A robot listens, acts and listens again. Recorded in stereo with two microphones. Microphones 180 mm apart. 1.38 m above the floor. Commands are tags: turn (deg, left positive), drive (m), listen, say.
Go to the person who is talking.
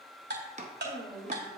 <turn deg="30"/>
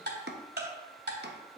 <listen/>
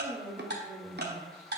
<turn deg="-20"/>
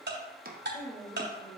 <drive m="1.0"/>
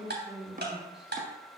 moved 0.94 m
<drive m="1.0"/>
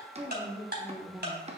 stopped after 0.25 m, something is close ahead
<turn deg="-10"/>
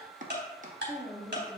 <say>Arrived at the woman speaking, straight ahead.</say>